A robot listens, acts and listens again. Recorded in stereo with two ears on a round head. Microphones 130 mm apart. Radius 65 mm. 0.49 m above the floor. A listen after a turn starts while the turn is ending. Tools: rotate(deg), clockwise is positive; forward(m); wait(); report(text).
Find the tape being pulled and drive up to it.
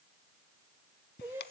wait()
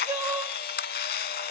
wait()
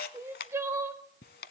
report("I can't make out tape being pulled, only crying and a camera shutter.")